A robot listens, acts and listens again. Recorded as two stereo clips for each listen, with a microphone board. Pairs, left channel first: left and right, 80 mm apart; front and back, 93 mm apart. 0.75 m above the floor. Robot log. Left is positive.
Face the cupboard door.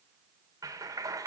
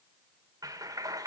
cmd idle
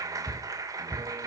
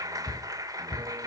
note: The cupboard door: 20° left.
cmd yaw +20
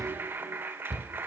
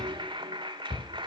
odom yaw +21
end: Found it: a cupboard door, straight ahead, 2 to 4 m away.